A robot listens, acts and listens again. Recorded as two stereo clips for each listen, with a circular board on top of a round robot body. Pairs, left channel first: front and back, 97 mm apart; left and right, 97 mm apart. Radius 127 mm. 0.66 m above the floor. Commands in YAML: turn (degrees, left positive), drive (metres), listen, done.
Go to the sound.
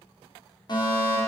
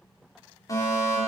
turn: 35
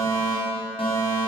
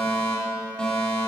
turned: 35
turn: 10
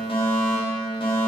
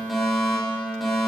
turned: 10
drive: 1.0
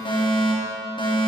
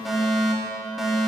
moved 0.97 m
drive: 1.0
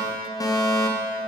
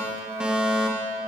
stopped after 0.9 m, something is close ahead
turn: -15
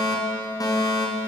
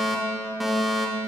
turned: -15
done: "Arrived at the fire alarm, straight ahead."